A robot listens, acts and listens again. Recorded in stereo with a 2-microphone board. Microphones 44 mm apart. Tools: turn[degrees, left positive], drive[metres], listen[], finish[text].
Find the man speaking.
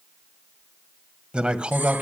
Thought: The man speaking: about 30° right or 150° right.
Action: turn[-30]
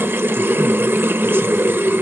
Action: listen[]
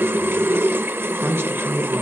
Thought: So it is at 115° right.
Action: turn[-115]
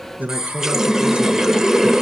Thought: The man speaking is now 35° right.
Action: turn[-35]
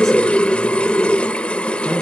Action: listen[]
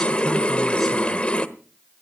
Action: listen[]
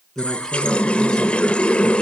Thought: The man speaking is now 10° left.
Action: turn[10]
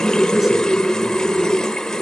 Action: listen[]
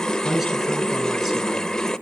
Action: finish[Facing the man speaking, over 4 m away.]